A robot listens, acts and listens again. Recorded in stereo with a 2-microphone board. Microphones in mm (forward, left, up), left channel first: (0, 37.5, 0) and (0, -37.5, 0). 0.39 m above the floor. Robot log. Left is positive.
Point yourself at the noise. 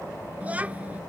note: The child speaking: about 20° right or 160° right.
cmd yaw -20
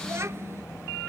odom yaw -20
note: The child speaking: about 35° right or 145° right.
cmd yaw -35
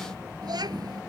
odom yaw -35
note: So it is at 115° right.
cmd yaw -115
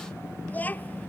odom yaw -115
note: The child speaking is now 20° left.
cmd yaw +20
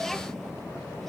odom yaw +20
cmd idle
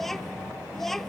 end: Facing the child speaking.